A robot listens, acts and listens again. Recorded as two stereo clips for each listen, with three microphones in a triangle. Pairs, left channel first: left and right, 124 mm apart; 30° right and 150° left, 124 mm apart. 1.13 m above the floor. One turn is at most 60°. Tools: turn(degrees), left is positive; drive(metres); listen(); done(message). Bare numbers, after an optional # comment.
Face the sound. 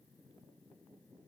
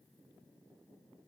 listen()
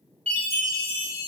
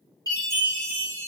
# The chime: 85° right.
turn(-60)
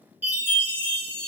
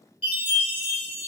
# The chime is now 20° right.
turn(-20)
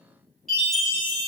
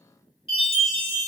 done("Facing the chime.")